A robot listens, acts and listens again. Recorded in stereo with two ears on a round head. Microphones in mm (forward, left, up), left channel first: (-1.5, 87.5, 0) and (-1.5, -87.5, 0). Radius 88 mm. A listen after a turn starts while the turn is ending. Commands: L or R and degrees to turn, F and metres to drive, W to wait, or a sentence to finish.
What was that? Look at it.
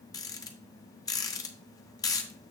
L20
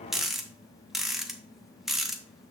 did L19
Found it: a rattle, straight ahead.